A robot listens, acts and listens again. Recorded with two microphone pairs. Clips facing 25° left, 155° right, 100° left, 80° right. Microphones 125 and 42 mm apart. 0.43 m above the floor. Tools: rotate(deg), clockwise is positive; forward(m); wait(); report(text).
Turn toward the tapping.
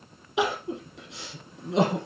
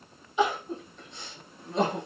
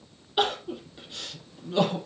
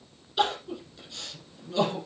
wait()
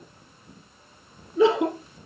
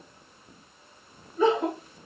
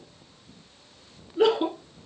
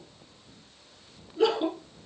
wait()
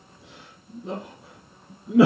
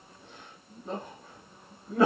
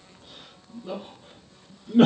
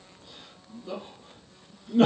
report("I can't make out tapping, only crying.")